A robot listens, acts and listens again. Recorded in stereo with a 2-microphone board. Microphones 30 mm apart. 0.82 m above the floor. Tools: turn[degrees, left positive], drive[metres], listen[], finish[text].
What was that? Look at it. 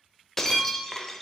Action: turn[30]
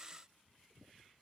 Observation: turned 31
Action: listen[]
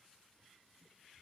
Action: finish[I heard breaking glass, but can't make it out now. It was about 20° right or 140° left.]